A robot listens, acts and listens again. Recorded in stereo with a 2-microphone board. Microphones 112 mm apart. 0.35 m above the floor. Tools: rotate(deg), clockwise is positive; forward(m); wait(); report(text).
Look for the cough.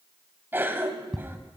rotate(20)
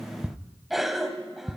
report("Found it: a cough, straight ahead.")